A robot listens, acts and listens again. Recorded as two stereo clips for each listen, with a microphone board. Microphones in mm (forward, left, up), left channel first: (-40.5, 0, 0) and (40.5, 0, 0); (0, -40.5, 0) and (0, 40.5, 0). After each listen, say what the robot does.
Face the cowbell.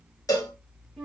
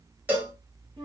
Turn 155° left.
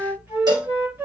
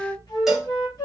Found it: a cowbell, straight ahead.